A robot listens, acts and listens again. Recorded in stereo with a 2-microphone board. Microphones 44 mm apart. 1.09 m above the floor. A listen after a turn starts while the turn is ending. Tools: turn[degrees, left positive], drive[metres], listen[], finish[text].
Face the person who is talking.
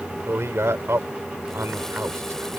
Action: turn[-90]
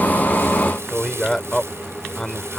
Thought: So it is at 10° left.
Action: turn[10]
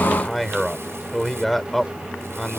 Action: finish[Facing the man speaking.]